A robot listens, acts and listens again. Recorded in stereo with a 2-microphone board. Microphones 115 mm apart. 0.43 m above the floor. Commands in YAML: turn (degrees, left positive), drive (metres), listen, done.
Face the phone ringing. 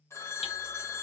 turn: 25
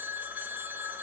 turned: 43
turn: -15
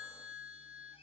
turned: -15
done: "Facing the phone ringing, 1 to 2 m away."